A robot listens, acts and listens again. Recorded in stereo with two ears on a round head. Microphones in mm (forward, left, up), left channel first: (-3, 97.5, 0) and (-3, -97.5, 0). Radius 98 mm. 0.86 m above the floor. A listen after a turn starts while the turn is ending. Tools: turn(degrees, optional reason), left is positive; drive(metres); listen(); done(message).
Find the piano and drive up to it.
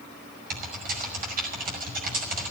listen()
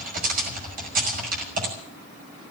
listen()
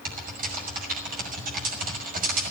done("I can't make out a piano to turn to.")